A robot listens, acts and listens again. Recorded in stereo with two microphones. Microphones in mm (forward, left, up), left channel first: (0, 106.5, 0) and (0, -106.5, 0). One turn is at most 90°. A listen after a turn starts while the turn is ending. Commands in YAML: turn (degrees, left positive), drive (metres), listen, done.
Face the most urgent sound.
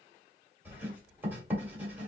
listen: true
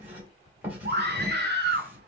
turn: -50
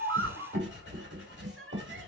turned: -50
listen: true
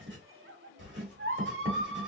turn: -75
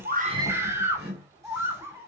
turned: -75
turn: -10
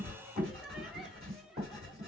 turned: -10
listen: true
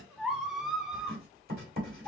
done: "Facing the scream."